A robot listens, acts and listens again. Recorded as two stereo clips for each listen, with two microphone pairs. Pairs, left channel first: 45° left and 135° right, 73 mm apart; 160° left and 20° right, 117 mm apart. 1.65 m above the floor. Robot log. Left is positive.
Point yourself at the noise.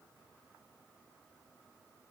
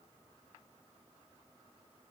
cmd idle
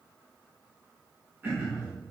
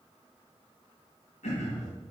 note: The throat clearing: 165° left.
cmd yaw +165
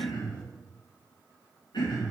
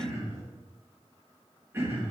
note: The throat clearing is now 50° left.
cmd yaw +50
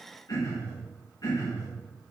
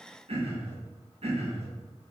note: The throat clearing is now 10° left.
cmd yaw +10
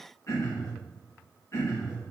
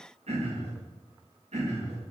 end: Found it: throat clearing, straight ahead.